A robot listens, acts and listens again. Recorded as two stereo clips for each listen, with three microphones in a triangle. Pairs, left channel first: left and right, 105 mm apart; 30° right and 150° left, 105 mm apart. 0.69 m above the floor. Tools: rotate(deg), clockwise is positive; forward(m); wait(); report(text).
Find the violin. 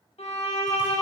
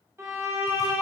rotate(-85)
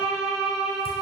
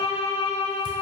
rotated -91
report("Facing the violin, under 1 m away.")